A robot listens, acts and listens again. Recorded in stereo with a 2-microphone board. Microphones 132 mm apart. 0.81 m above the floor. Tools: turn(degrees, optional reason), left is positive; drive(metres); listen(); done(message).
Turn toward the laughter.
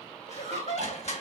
turn(degrees=65, reason="The laughter: about 65° left or 115° left.")
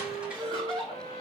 turn(degrees=45, reason="So it is at 45° left.")
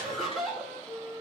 done("Facing the laughter.")